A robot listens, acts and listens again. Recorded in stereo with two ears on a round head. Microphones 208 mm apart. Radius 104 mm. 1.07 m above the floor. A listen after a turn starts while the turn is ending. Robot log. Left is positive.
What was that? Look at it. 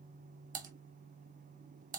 note: The typing on a keyboard: about 35° right or 145° right.
cmd yaw -35
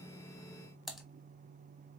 end: Found it: typing on a keyboard, straight ahead, under 1 m away.